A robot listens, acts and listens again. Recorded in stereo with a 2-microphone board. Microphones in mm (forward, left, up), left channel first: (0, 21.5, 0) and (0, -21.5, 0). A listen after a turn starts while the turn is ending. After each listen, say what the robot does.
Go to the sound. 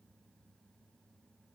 Keep listening.
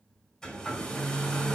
Turn 15° left.
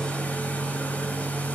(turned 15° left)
Turn 150° left.
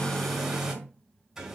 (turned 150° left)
Turn 10° right.
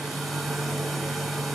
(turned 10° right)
Drive 1.0 m forward.
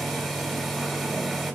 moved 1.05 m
Drive 1.0 m forward.
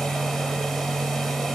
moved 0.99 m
Turn 10° left.
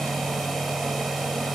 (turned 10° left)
Drive 1.0 m forward.
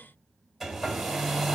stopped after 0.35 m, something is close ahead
Arrived at the hair dryer, straight ahead.